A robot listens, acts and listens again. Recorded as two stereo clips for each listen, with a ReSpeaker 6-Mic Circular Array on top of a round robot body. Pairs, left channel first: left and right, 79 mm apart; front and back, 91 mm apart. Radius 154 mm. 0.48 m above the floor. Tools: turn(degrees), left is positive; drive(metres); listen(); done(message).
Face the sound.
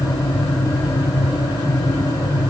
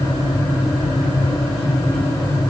listen()
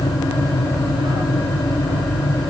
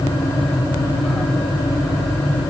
listen()
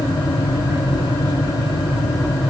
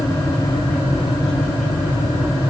done("I can't make out anything.")